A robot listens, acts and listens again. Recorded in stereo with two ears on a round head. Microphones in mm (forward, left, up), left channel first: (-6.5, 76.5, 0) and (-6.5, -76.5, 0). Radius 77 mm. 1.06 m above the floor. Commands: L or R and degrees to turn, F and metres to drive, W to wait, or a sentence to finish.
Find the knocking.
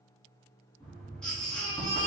L30
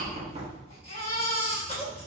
R25
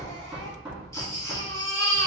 Facing the knocking, 1 to 2 m away.